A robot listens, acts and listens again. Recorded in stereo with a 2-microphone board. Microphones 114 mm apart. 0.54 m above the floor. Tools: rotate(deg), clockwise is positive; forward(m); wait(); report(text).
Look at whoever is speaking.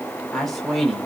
rotate(-30)
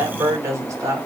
rotate(30)
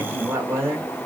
rotate(25)
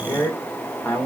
rotate(-20)
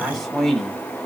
report("Facing the man speaking.")